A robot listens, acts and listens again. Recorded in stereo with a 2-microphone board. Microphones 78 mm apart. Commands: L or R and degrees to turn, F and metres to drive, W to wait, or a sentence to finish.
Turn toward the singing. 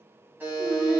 R55
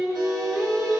R20
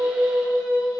R10
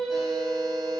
Found it: singing, straight ahead, 1 to 2 m away.